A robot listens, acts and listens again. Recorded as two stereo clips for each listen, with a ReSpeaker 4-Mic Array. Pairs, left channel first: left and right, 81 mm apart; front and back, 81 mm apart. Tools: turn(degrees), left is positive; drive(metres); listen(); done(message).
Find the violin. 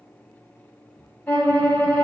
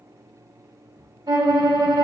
turn(degrees=155)
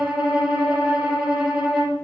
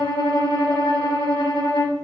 turn(degrees=-10)
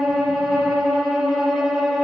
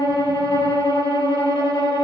done("Found it: a violin, straight ahead.")